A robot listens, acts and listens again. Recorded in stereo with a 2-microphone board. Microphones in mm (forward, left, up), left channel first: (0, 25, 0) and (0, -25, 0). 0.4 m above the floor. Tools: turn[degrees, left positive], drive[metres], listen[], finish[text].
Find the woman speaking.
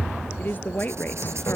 Thought: The woman speaking: about 40° left or 140° left.
Action: turn[40]
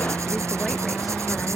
Action: listen[]
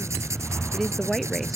Action: finish[Found it: a woman speaking, straight ahead.]